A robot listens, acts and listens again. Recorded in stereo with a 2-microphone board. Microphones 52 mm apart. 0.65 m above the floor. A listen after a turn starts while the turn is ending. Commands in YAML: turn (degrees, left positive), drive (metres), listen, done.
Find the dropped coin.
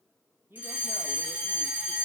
listen: true
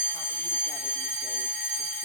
listen: true
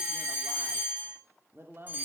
done: "I can't make out a dropped coin, only a woman speaking and a fire alarm."